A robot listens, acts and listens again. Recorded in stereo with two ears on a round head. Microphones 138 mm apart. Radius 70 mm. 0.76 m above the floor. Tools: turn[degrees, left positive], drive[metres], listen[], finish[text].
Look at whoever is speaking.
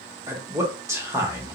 Thought: The man speaking: about 20° right or 160° right.
Action: turn[-20]
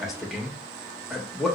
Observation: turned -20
Action: finish[Facing the man speaking.]